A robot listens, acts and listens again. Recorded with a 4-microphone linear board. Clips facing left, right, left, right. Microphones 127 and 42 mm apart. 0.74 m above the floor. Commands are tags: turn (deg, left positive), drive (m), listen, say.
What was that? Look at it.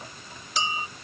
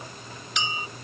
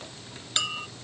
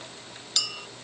<turn deg="35"/>
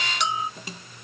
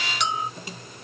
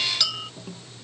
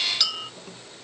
<say>Found it: a clink, straight ahead.</say>